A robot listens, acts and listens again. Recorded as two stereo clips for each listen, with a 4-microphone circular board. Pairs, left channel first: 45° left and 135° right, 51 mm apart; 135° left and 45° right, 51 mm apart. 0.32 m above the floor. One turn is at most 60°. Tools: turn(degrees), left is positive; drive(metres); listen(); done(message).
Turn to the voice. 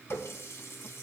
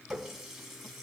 listen()
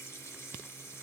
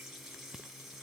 listen()
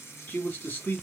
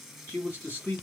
turn(degrees=60)
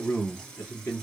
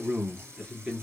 turn(degrees=25)
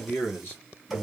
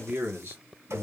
done("Facing the man speaking.")